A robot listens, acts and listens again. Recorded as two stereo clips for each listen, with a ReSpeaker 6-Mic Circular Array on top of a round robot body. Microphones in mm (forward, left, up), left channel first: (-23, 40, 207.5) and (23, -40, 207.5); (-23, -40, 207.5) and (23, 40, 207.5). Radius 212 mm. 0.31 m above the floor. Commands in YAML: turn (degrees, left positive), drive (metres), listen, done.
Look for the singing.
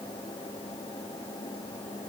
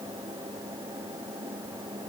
listen: true
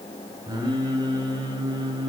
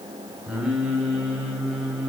turn: -25
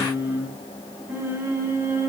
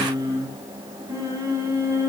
done: "Found it: singing, straight ahead."